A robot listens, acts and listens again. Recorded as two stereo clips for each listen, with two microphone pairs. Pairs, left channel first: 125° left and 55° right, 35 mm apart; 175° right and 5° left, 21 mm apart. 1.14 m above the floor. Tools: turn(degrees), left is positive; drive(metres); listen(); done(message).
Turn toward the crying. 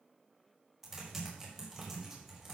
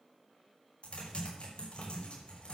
listen()
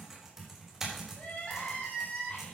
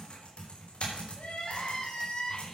turn(degrees=175)
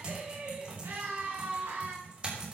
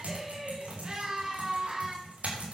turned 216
turn(degrees=-40)
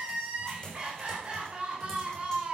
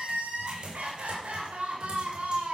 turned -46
done("Facing the crying, 2 to 4 m away.")